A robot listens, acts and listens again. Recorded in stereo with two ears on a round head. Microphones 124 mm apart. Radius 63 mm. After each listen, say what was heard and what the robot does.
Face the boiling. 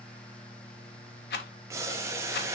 The boiling: about 20° right or 160° right. Turn 20° right.
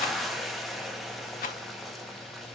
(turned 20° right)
Facing the boiling.